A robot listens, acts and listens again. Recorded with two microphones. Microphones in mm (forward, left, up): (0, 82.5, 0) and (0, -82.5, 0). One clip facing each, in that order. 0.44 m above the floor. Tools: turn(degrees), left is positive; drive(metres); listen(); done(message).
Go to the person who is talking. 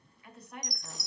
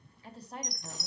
turn(degrees=-30)
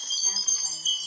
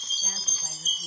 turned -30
listen()
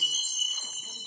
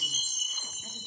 listen()
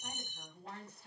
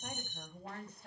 turn(degrees=-115)
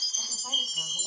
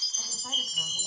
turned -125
turn(degrees=10)
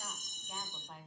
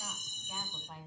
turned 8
drive(metres=1.0)
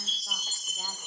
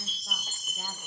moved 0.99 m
listen()
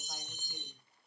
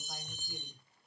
listen()
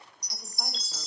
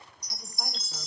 done("I heard a woman speaking from this way, but can't make it out now. I did not reach it.")